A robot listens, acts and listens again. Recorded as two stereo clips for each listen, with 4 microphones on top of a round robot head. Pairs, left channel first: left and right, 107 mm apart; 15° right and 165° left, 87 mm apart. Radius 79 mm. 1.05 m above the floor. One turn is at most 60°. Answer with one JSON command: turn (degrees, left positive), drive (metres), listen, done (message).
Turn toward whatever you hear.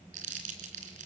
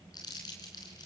{"turn": -60}
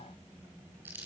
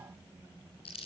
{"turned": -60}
{"turn": -15}
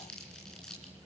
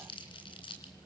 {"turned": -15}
{"done": "Found it: crumpling, straight ahead."}